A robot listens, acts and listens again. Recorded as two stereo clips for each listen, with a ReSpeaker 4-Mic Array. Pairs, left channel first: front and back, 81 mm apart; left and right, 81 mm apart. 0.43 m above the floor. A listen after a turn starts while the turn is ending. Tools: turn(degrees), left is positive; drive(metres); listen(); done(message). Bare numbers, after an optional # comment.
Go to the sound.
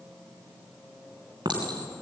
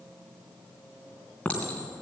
# The clink: 165° left.
turn(165)
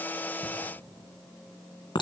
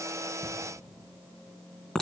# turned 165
drive(1.0)
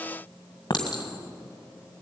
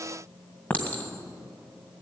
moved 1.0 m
# The clink is now 20° left.
turn(20)
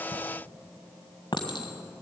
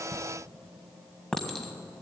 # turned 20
# The clink is now 10° left.
turn(10)
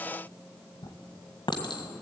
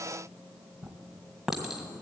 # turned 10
drive(1.0)
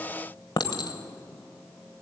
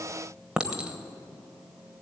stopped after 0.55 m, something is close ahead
# The clink is now 10° right.
turn(-10)
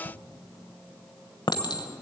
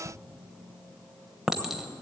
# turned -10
done("I am next to the clink.")